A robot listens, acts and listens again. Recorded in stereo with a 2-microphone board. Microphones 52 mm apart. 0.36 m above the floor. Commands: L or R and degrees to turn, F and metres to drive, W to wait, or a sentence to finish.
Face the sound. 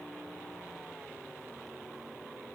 W
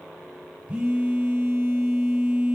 R20
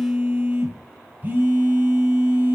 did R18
R145
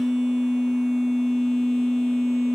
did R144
Facing the phone buzzing, 1 to 2 m away.